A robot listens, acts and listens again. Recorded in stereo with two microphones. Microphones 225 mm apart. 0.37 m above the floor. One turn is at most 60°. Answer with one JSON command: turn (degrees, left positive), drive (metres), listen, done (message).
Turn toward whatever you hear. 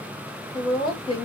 {"turn": 25}
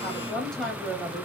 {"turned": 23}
{"done": "Facing the woman speaking."}